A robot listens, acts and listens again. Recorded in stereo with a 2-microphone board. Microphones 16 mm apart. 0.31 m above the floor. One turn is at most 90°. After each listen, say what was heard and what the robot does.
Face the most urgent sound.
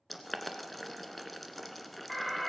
Turn 30° left.
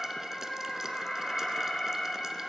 So it is at 135° left. Turn 90° left.
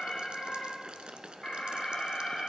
The alarm is now 40° left. Turn 40° left.
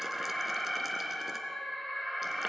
Found it: an alarm, straight ahead.